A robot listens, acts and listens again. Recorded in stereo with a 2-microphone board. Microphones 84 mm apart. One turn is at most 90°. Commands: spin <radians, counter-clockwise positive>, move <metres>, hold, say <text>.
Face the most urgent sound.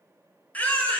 spin 0.35
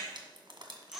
say Facing the baby crying, 1 to 2 m away.